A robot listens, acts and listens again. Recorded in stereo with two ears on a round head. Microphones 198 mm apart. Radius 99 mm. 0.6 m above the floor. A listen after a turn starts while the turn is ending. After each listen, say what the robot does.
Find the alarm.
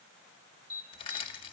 Turn 45° right.
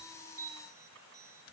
Keep listening.
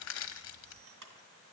Turn 85° right.
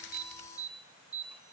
Found it: an alarm, straight ahead.